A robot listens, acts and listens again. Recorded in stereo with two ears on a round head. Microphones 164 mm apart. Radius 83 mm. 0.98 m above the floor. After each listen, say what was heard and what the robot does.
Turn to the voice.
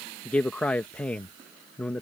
Turn 30° left.
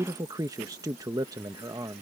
So it is at 20° right. Turn 20° right.
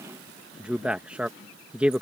The man speaking is now 10° right. Turn 10° right.
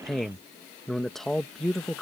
Facing the man speaking.